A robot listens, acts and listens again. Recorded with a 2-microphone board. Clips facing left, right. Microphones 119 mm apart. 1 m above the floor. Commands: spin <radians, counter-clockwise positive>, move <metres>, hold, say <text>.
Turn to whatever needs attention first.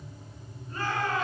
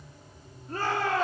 spin -1.31
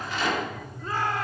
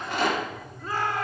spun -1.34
say Found it: a shout, straight ahead.